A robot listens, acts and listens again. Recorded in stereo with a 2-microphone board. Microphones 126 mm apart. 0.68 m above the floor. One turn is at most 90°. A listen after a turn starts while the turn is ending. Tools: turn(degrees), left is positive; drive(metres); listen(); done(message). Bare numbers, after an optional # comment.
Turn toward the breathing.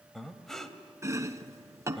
turn(30)
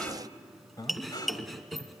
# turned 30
# So it is at 145° left.
turn(90)
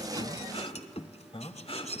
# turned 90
# The breathing is now 55° left.
turn(55)
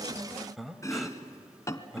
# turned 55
done("Facing the breathing, 1 to 2 m away.")